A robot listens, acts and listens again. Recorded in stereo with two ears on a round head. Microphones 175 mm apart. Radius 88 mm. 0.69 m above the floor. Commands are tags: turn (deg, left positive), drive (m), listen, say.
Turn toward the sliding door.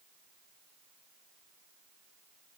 <listen/>
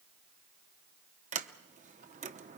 <turn deg="-40"/>
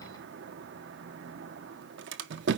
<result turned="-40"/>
<turn deg="-95"/>
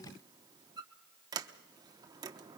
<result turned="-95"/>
<turn deg="-20"/>
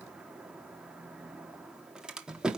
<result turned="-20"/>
<say>Found it: a sliding door, straight ahead, under 1 m away.</say>